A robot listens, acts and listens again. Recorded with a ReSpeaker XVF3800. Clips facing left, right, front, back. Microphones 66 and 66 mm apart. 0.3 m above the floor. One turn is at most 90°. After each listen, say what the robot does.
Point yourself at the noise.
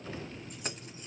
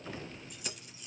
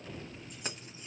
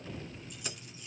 Turn 45° left.
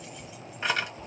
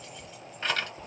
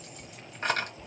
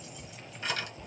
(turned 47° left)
Turn 20° left.
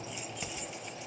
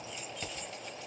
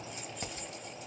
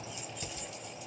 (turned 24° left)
Turn 15° left.
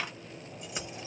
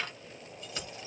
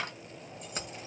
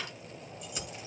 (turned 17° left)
Turn 25° left.
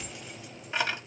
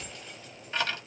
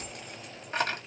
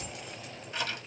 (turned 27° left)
Turn 25° left.
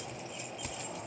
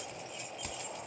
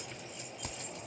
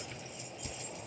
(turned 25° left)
Facing the keys jangling.